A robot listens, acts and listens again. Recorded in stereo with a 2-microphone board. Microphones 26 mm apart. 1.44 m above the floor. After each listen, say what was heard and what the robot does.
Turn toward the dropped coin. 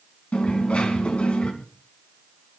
The dropped coin: about 55° left or 125° left. Turn 55° left.
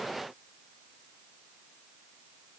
Keep listening.
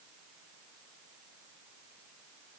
I heard a dropped coin, but can't make it out now. It was about straight ahead or 70° left.